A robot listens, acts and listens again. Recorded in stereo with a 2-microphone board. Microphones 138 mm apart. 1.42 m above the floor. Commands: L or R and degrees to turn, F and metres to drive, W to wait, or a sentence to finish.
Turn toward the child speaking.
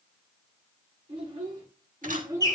R25
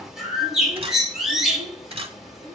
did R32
R30
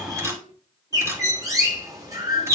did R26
W
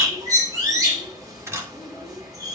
R140
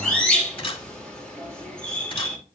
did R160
L20
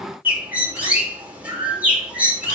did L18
W
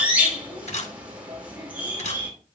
I heard a child speaking from this way, but can't make it out now.